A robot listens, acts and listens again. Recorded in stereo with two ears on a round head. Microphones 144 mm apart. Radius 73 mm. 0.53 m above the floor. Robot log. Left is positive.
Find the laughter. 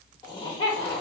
note: The laughter: about 35° left or 145° left.
cmd yaw +35
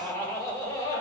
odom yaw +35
note: So it is at 25° left.
cmd yaw +25
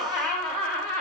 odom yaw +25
note: The laughter is now 15° left.
cmd yaw +15
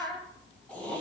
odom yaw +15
note: The laughter is now 10° left.
cmd yaw +10
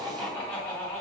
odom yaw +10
note: The laughter is now 10° left.
cmd yaw +10
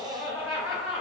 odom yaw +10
end: Facing the laughter, 2 to 4 m away.